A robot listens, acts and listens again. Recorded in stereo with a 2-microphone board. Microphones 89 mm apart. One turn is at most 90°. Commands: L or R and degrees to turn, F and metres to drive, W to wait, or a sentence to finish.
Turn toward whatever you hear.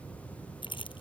L90
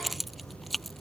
Facing the keys jangling.